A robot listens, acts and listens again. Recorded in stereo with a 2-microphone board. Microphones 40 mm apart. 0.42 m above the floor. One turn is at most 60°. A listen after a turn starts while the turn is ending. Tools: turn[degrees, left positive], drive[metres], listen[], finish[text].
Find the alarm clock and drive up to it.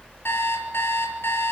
Action: turn[60]
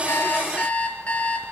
Thought: So it is at 35° left.
Action: turn[35]
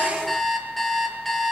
Action: drive[1.0]
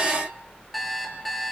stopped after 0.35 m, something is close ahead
Action: finish[Blocked. The alarm clock is further on, straight ahead.]